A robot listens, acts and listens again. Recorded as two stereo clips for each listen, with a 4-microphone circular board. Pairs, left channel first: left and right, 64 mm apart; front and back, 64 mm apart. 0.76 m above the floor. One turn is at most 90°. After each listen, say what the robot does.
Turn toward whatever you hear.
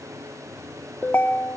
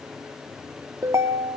Turn 90° left.
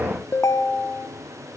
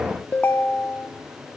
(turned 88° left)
Turn 55° left.
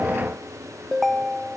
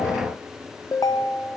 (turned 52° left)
Facing the ringtone, 1 to 2 m away.